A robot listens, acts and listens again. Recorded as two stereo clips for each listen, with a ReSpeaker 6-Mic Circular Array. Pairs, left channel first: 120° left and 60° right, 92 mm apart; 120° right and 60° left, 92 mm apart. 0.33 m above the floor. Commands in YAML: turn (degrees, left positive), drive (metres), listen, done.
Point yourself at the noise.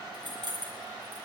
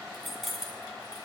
turn: -30
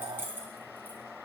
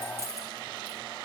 done: "Facing the keys jangling."